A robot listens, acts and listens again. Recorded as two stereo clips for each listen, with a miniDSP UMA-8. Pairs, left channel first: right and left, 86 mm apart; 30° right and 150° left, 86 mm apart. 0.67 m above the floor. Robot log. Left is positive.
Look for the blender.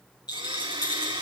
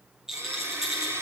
note: The blender: 90° left.
cmd yaw +90
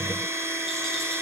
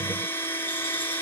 note: The blender is now 35° left.
cmd yaw +35
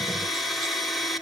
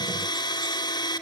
end: Found it: a blender, straight ahead.